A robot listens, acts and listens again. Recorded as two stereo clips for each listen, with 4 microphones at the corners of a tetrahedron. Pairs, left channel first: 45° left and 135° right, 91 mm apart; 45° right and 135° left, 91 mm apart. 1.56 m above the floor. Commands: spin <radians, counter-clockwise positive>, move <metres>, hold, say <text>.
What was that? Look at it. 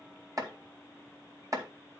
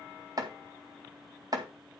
spin 3.05
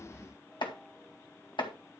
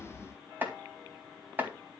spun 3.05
spin 1.22
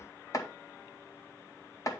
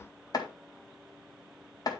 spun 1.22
say Facing the chopping.